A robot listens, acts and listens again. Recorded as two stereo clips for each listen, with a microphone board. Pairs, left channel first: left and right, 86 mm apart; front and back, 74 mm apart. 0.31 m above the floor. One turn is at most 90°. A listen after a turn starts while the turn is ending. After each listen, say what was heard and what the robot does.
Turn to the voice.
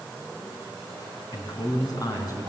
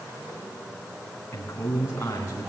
The man speaking: 50° left. Turn 50° left.
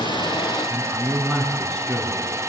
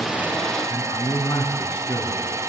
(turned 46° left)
Facing the man speaking.